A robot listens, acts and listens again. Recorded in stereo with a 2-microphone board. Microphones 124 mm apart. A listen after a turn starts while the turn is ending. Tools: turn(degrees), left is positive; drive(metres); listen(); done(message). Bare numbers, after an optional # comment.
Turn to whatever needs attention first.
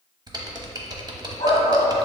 # The shout: about 50° left or 130° left.
turn(50)
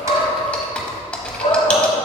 # So it is at 70° left.
turn(70)
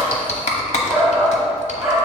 done("Found it: a shout, straight ahead.")